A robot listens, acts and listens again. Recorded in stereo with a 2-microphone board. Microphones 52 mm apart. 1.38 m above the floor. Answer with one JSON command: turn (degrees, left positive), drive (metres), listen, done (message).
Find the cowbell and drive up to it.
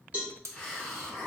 {"turn": -25}
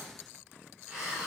{"listen": true}
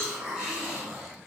{"turn": -130}
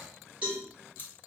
{"turn": -25}
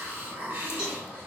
{"listen": true}
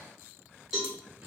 {"turn": -10}
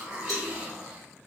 {"listen": true}
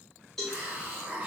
{"drive": 1.0}
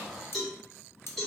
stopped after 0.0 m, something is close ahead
{"done": "Something is in my way. I am facing the cowbell but have not reached it."}